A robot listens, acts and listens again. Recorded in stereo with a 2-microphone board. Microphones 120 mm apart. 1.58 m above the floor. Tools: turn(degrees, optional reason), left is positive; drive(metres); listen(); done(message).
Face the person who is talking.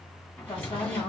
turn(degrees=45, reason="The woman speaking: about 45° left or 135° left.")
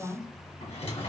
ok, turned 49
done("Found it: a woman speaking, straight ahead.")